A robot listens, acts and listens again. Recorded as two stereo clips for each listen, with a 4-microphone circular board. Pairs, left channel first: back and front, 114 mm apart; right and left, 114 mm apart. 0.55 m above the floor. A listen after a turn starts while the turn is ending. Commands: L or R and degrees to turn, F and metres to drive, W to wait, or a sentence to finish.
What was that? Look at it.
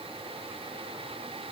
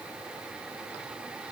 W
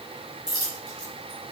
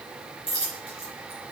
R55
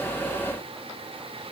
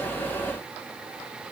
Facing where the dropped coin came from. I can't hear it now.